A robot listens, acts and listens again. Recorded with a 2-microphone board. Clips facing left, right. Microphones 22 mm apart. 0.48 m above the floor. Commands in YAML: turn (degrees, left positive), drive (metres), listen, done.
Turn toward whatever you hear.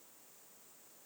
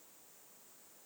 listen: true
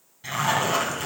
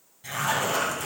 turn: 25
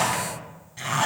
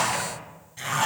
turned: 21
done: "Found it: a zipper, straight ahead, 2 to 4 m away."